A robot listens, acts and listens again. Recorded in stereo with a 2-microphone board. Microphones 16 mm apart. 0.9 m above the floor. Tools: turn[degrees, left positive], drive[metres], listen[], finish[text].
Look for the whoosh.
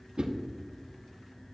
Thought: The whoosh: about 70° right or 110° right.
Action: turn[-70]
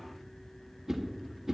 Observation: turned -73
Thought: So it is at 30° right.
Action: turn[-30]
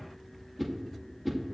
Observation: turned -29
Action: finish[Found it: a whoosh, straight ahead, under 1 m away.]